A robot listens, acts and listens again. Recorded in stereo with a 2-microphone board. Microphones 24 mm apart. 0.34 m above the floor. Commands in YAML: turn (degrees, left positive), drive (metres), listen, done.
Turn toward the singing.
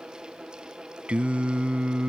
turn: -55
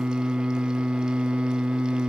turn: -60
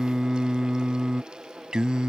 turn: -40
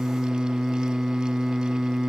turn: -20
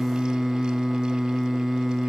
done: "Found it: singing, straight ahead."